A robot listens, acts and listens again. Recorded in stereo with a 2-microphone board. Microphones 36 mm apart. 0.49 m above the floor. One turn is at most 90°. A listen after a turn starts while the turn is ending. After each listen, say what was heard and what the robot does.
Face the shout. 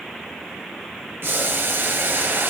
Keep listening.
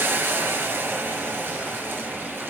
Keep listening.
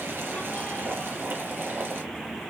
I can't make out a shout to turn to.